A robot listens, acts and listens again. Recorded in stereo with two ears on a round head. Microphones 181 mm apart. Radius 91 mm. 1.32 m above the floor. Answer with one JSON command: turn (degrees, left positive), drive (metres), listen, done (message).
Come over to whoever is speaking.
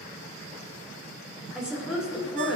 {"turn": -30}
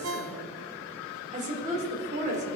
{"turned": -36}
{"turn": -140}
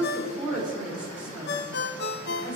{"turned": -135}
{"drive": 1.0}
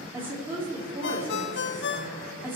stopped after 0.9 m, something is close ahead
{"turn": -10}
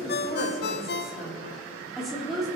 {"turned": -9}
{"done": "Something is in my way. I am facing the woman speaking but have not reached it."}